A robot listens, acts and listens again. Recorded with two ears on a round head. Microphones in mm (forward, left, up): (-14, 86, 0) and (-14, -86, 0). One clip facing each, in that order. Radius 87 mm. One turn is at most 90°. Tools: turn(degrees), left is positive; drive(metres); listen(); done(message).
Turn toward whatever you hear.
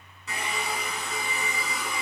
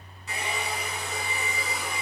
turn(degrees=75)
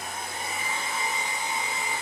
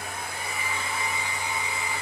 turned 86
turn(degrees=20)
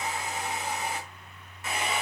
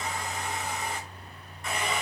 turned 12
done("Found it: a hair dryer, straight ahead, over 4 m away.")